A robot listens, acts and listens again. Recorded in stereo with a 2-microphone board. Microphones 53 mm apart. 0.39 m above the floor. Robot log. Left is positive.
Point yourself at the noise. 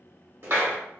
note: The clap: about 50° right or 130° right.
cmd yaw -50
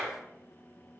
note: So it is at 10° right.
cmd yaw -10
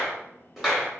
end: Facing the clap.